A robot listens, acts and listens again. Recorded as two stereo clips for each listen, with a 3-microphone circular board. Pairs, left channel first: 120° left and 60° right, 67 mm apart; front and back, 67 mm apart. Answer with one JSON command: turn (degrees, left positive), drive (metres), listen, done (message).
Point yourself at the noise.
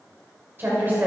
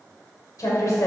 {"done": "Found it: a woman speaking, straight ahead, 1 to 2 m away."}